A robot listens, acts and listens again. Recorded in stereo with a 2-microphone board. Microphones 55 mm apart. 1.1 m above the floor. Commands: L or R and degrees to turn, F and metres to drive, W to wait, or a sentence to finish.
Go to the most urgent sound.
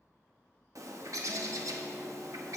W
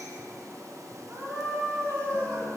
R50
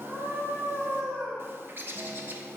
R85
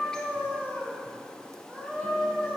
R25
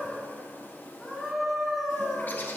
F1.0
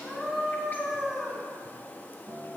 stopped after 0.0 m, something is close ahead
Blocked. The scream is further on, straight ahead.